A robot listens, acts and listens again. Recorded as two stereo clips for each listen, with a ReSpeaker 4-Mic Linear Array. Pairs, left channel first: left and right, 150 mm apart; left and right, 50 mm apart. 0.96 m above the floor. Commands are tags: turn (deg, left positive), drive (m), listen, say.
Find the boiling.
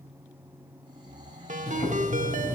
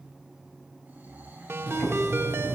<turn deg="45"/>
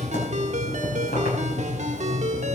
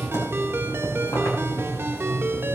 <turn deg="85"/>
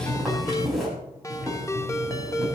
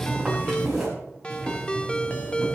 <say>Found it: boiling, straight ahead, over 4 m away.</say>